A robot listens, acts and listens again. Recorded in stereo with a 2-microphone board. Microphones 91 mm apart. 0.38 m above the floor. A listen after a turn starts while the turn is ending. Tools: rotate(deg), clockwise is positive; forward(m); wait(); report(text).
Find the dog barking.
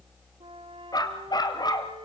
rotate(-50)
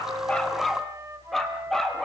report("Found it: a dog barking, straight ahead, 2 to 4 m away.")